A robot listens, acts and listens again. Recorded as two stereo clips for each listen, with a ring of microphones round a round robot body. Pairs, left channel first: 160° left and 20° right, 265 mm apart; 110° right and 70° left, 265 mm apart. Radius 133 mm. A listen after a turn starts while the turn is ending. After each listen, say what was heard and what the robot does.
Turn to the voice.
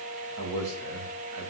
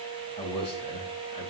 The man speaking: 45° right. Turn 45° right.
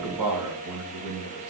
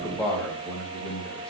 The man speaking is now 25° right. Turn 25° right.
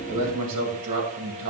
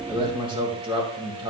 Facing the man speaking, 2 to 4 m away.